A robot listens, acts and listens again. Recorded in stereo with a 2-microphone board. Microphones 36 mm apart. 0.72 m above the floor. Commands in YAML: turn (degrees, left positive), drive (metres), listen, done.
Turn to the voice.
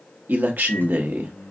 turn: -60
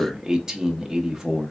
turn: -20
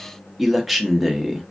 done: "Facing the man speaking."